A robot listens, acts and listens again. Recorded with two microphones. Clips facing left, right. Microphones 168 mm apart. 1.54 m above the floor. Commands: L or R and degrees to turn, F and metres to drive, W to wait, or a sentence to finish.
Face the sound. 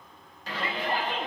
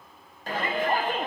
R50
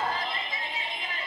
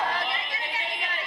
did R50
R80
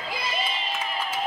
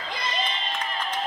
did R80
L10
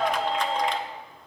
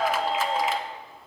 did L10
Found it: a shout, straight ahead.